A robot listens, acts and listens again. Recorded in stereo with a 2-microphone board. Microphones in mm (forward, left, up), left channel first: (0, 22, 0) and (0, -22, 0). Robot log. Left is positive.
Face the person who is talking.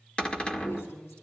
cmd yaw +90
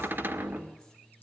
cmd idle
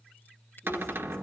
cmd idle
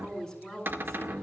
note: The woman speaking is now 10° left.
cmd yaw +10
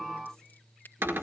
cmd idle
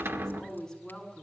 end: Facing the woman speaking, over 4 m away.